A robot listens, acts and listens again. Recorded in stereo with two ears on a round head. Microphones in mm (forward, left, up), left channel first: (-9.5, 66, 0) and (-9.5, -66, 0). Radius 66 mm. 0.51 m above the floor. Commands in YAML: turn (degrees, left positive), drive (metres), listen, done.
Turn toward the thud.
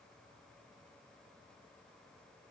listen: true
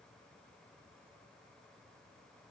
listen: true
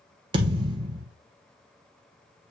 turn: -30
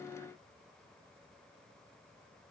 listen: true
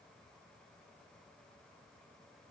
done: "I heard a thud, but can't make it out now. It was about straight ahead or 120° right."